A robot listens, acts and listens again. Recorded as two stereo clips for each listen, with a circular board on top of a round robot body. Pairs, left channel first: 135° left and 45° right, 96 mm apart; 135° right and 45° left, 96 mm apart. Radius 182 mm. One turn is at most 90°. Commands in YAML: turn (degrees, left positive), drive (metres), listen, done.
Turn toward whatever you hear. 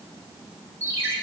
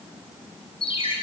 turn: -90
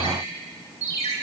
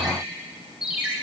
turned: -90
turn: -35
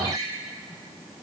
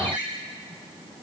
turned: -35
turn: 10
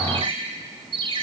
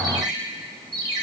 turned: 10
done: "Facing the ringtone, over 4 m away."